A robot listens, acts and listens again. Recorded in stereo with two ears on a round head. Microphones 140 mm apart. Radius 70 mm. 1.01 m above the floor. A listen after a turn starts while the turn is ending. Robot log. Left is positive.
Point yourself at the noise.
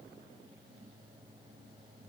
cmd idle
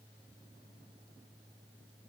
cmd idle
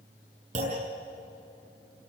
note: The clunk: about 50° right or 130° right.
cmd yaw -50
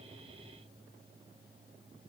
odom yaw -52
cmd idle
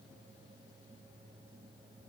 end: I heard a clunk, but can't make it out now. It was about 5° left or 80° right.